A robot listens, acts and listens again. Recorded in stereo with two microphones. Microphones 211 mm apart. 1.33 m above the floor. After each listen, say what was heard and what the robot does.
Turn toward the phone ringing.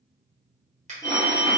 The phone ringing: about 15° left or 165° left. Turn 15° left.
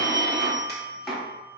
Facing the phone ringing, 1 to 2 m away.